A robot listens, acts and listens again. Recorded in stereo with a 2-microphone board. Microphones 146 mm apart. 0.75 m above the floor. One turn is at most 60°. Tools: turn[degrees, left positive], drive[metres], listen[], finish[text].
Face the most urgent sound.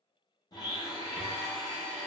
Action: listen[]
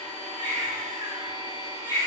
Thought: The baby crying: about 30° right or 150° right.
Action: turn[-30]
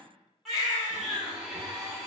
Action: finish[Facing the baby crying, 1 to 2 m away.]